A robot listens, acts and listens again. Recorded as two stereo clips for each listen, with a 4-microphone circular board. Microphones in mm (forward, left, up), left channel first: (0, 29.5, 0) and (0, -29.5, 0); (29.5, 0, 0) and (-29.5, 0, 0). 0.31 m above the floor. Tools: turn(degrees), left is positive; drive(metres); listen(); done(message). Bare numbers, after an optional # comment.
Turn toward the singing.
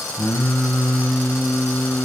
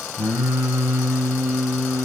# The singing: 150° left.
turn(150)
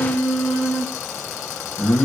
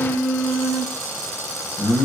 # The singing is now 15° left.
turn(15)
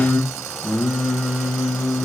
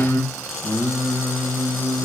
done("Facing the singing.")